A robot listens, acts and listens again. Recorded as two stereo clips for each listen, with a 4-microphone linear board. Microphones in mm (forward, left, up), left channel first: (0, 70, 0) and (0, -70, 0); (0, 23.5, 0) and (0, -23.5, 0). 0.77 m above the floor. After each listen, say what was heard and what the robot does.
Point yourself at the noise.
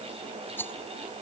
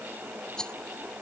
The rattle: about 15° left or 165° left. Turn 15° left.
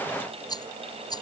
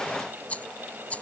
So it is at 150° left. Turn 150° left.
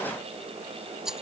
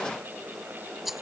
Found it: a rattle, straight ahead.